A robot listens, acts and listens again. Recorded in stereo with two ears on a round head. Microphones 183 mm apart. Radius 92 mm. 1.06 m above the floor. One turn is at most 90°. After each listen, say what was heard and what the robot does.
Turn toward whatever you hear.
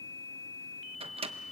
The microwave: about 30° right or 150° right. Turn 30° right.
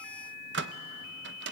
So it is at 120° right. Turn 90° right.
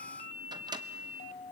The microwave is now 20° right. Turn 20° right.
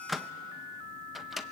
Facing the microwave.